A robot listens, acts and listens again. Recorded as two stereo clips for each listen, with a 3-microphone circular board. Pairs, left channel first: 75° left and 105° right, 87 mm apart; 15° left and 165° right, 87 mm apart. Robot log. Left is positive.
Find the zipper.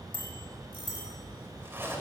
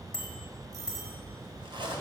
note: The zipper: 170° right.
cmd yaw -170
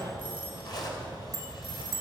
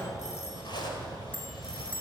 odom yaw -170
note: The zipper is now 40° left.
cmd yaw +40
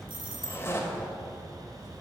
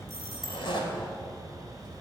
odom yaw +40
note: The zipper is now 15° left.
cmd yaw +15
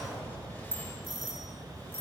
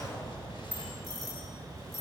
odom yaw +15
cmd idle
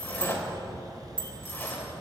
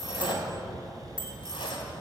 end: Facing the zipper.